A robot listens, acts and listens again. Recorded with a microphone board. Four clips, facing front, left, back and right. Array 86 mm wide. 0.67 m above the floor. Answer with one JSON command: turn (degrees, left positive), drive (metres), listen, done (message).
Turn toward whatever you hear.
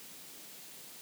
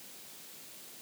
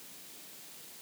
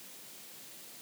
{"listen": true}
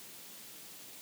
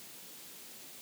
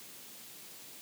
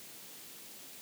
{"listen": true}
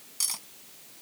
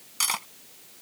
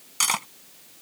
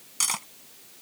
{"turn": 170}
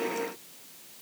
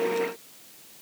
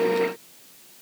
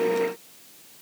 {"listen": true}
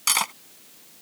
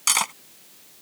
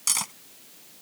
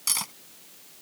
{"turn": 50}
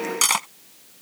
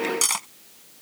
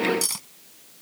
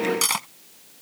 {"turn": -10}
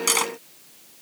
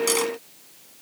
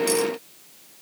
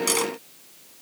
{"done": "Facing the cutlery clinking."}